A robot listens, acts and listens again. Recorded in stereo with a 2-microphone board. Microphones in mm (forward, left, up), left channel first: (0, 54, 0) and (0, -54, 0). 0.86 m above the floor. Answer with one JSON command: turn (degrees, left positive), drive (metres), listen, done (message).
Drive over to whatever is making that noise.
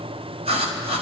{"turn": -70}
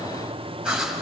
{"drive": 1.0}
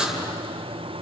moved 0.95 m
{"drive": 1.0}
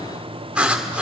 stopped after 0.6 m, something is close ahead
{"turn": -10}
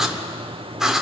{"done": "Arrived at the writing, straight ahead."}